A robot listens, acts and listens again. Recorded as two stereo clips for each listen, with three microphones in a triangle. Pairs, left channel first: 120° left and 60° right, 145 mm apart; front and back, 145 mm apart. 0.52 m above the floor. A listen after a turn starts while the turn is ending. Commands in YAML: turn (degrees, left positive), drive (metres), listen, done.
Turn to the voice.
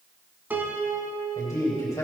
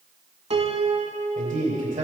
turn: -175
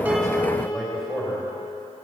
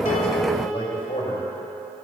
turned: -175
turn: 30
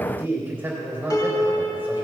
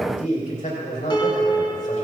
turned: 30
turn: 15
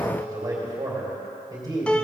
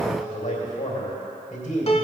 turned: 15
done: "Facing the man speaking, 2 to 4 m away."